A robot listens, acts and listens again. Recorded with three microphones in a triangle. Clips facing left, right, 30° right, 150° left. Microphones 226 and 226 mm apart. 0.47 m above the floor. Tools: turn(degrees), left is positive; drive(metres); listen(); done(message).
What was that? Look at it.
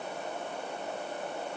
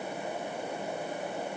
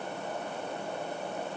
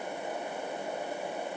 listen()
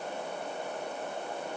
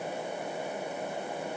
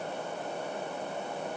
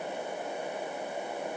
listen()
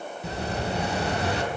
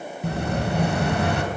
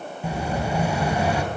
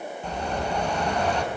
turn(degrees=-110)
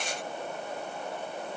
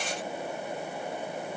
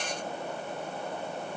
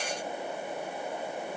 done("Facing where the explosion came from. I can't hear it now.")